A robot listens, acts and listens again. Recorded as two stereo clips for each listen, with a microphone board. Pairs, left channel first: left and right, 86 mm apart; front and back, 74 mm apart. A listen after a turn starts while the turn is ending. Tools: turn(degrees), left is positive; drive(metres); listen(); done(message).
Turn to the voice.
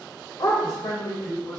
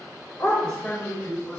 turn(degrees=65)
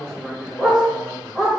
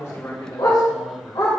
turn(degrees=-15)
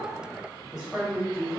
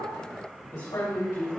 turn(degrees=-15)
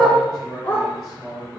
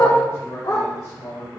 turn(degrees=-10)
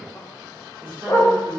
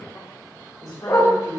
done("Facing the man speaking, 2 to 4 m away.")